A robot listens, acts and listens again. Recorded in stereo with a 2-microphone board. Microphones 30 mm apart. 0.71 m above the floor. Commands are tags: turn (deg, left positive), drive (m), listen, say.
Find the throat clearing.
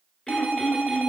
<turn deg="20"/>
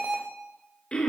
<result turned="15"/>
<turn deg="145"/>
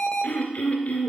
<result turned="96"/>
<turn deg="50"/>
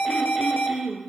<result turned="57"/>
<say>Facing the throat clearing.</say>